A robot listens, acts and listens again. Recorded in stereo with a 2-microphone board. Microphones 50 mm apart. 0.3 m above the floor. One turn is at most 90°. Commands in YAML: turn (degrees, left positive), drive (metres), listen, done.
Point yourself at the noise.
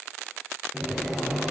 turn: 30
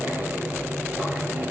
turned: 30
turn: -30
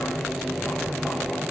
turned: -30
done: "Found it: boiling, straight ahead."